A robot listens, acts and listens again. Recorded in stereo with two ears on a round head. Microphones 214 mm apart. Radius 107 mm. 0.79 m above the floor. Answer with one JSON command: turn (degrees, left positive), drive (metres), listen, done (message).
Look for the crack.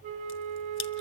{"turn": 50}
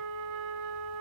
{"listen": true}
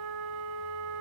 {"done": "I heard a crack, but can't make it out now. It was about straight ahead or 80° left."}